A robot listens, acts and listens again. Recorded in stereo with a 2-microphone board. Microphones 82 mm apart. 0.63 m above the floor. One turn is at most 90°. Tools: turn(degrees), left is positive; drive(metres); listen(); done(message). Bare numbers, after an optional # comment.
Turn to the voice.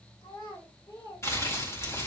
# The child speaking: about 65° left or 115° left.
turn(65)
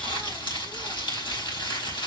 listen()
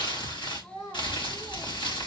# So it is at 45° left.
turn(45)
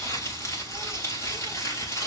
listen()
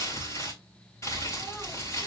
listen()
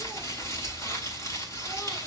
done("I heard a child speaking from this way, but can't make it out now.")